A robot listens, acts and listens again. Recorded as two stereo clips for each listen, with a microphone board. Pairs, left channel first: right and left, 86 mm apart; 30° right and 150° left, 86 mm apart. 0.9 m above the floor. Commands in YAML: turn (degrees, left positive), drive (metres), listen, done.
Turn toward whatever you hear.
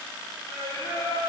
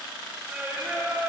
turn: -125
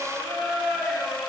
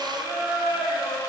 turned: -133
done: "Facing the singing."